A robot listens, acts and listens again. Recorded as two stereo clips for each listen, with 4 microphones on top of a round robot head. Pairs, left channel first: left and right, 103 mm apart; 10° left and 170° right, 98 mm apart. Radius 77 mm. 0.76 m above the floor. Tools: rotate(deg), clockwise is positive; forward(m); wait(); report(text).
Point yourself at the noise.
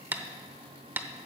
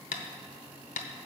rotate(20)
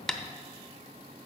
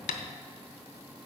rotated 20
report("Facing the tapping.")